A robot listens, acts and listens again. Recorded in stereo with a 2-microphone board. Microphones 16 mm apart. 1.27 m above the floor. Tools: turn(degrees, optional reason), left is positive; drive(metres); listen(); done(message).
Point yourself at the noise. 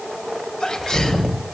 turn(degrees=90)
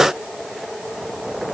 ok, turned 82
turn(degrees=10, reason="Nothing new. It was at 10° left.")
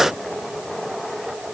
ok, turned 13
done("I heard a sneeze from this way, but can't make it out now.")